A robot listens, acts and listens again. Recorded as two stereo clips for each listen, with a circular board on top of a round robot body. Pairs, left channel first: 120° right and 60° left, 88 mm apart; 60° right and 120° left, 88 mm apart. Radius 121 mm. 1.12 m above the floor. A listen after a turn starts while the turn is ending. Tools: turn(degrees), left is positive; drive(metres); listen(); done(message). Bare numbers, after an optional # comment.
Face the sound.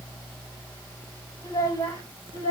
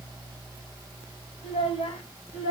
# The child speaking: 75° right.
turn(-75)
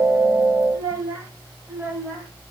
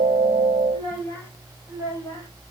done("Found it: a child speaking, straight ahead.")